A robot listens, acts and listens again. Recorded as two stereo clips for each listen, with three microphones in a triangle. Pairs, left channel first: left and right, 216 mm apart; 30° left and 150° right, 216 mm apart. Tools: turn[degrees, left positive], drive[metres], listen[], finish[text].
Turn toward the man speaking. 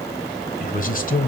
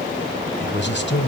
Thought: The man speaking: 50° left.
Action: turn[50]
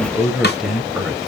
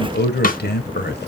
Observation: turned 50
Action: finish[Found it: a man speaking, straight ahead.]